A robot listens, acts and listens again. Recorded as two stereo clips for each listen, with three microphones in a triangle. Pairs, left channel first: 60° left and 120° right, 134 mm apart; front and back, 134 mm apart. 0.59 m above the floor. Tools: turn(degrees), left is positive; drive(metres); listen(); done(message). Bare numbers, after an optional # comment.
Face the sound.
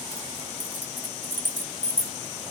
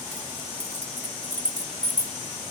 # The keys jangling: 175° left.
turn(175)
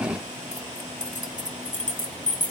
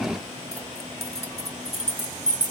# The keys jangling is now 55° left.
turn(55)
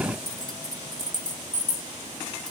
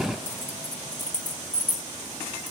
done("Facing the keys jangling.")